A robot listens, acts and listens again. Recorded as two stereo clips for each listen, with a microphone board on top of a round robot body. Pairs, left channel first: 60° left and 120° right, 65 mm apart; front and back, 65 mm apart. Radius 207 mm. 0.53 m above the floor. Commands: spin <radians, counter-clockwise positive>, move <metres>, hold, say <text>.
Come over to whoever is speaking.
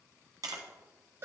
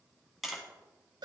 hold
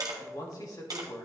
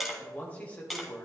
spin 1.13
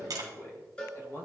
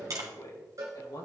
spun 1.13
spin 0.17
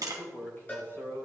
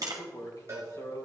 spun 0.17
move 1.0
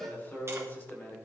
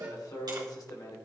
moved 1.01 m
move 1.0
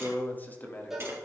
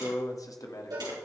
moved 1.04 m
move 1.0
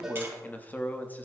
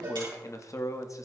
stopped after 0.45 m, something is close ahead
say Arrived at the man speaking, straight ahead.